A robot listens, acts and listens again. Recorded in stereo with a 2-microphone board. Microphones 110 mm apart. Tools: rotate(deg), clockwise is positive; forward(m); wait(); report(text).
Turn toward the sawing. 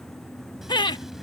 wait()
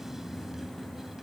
wait()
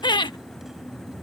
report("I can't make out sawing, only laughter.")